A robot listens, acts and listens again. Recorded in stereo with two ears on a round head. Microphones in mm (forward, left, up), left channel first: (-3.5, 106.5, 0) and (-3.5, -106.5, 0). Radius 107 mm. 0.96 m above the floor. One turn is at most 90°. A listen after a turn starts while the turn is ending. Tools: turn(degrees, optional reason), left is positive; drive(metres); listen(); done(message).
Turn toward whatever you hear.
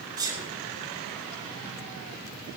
turn(degrees=-15, reason="The sneeze: about 15° right or 165° right.")
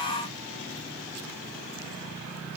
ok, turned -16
listen()
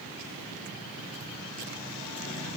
done("I heard a sneeze, but can't make it out now. It was about straight ahead or 145° right.")